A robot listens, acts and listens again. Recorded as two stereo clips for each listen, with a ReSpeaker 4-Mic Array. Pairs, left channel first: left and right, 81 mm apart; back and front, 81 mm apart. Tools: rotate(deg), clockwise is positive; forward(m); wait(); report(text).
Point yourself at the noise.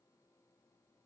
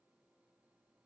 wait()
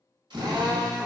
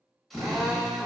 rotate(90)
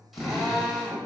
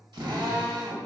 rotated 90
report("Facing the drill.")